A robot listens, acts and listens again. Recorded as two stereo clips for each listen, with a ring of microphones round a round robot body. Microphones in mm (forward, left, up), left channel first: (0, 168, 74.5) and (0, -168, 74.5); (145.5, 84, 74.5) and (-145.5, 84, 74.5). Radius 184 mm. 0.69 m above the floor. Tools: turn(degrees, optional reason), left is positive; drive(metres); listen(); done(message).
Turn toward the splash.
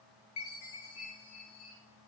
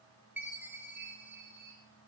listen()
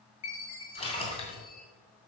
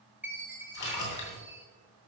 turn(degrees=15, reason="The splash: 15° left.")
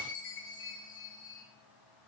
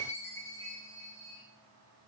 done("Facing where the splash came from. I can't hear it now.")